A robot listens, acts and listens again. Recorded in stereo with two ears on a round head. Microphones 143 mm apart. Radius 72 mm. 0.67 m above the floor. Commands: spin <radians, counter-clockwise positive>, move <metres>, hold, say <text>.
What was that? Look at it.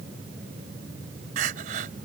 spin -0.96
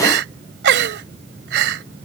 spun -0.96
spin -1.31
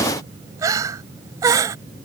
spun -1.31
spin -0.35
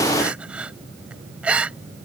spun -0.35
spin -0.17
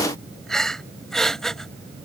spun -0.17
say Found it: crying, straight ahead.